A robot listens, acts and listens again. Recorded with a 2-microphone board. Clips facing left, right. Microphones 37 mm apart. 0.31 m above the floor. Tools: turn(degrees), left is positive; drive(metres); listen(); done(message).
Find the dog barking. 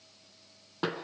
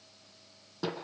listen()
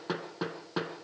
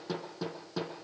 listen()
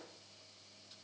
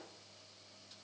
done("I can't make out a dog barking, only hammering.")